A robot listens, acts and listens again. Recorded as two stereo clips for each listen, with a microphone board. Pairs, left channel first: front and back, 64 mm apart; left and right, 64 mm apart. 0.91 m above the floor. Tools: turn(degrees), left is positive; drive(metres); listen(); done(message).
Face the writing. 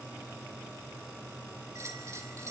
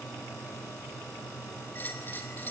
listen()
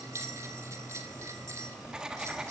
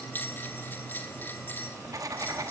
turn(degrees=-100)
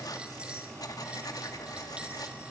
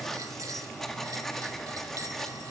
done("Facing the writing.")